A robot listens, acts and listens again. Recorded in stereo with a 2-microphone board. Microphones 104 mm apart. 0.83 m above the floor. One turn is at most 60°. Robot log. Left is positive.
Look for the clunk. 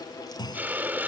note: The clunk: about 40° left or 140° left.
cmd yaw +40
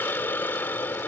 cmd idle
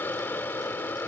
end: I heard a clunk, but can't make it out now. It was about straight ahead or 100° left.